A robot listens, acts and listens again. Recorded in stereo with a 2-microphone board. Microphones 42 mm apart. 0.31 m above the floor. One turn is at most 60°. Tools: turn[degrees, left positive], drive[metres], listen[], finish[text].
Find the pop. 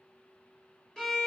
Action: listen[]
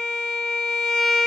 Action: listen[]
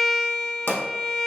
Thought: The pop: about 60° left or 120° left.
Action: turn[60]
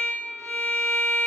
Action: listen[]
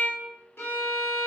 Action: finish[I heard a pop, but can't make it out now. It was about straight ahead or 60° left.]